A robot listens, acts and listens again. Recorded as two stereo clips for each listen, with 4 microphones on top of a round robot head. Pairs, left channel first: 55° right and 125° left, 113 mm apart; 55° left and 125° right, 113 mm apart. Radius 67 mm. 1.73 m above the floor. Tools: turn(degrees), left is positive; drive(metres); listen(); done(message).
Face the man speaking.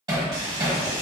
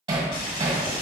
listen()
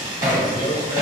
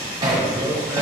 turn(degrees=-55)
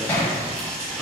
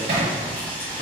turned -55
listen()
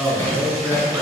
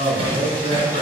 turn(degrees=60)
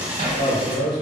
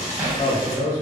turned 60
done("Found it: a man speaking, straight ahead.")